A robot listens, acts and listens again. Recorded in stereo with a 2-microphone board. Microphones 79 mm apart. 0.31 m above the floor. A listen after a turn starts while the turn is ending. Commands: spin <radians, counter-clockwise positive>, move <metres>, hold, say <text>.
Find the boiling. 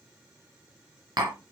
hold
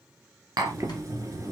spin -0.70
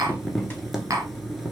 say Facing the boiling, 1 to 2 m away.